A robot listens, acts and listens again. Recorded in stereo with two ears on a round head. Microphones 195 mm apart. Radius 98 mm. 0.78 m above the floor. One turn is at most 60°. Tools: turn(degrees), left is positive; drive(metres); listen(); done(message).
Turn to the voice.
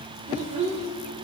turn(degrees=-35)
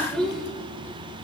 done("Facing the child speaking, 2 to 4 m away.")